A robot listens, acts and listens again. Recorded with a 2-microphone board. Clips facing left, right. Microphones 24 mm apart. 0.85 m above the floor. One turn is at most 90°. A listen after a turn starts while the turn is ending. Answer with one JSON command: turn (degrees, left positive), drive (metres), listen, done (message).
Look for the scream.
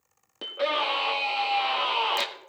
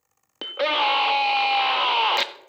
{"turn": -30}
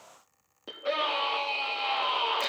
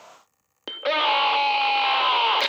{"turn": -90}
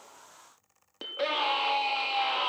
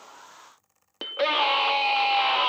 {"turn": -35}
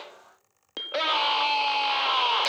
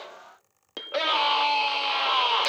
{"done": "Facing the scream, 1 to 2 m away."}